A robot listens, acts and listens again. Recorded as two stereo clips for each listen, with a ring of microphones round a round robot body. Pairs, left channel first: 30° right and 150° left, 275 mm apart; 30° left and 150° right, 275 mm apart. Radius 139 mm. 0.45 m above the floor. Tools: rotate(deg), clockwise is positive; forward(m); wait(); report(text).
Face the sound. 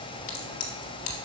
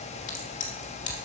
rotate(20)
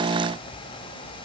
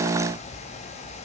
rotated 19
report("I heard a crack from this way, but can't make it out now.")